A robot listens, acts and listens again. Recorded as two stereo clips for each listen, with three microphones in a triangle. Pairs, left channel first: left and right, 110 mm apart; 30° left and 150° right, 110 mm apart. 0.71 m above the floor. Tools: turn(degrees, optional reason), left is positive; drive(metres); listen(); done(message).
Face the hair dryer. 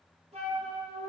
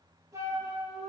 listen()
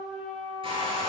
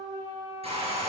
turn(degrees=-125, reason="The hair dryer: 125° right.")
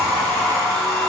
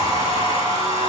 done("Found it: a hair dryer, straight ahead, 2 to 4 m away.")